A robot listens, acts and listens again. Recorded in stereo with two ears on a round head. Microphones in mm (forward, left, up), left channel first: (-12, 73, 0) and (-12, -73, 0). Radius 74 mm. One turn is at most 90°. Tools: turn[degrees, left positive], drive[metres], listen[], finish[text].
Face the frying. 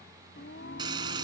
Thought: The frying: about 25° right or 155° right.
Action: turn[-25]
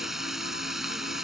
Action: finish[Facing the frying.]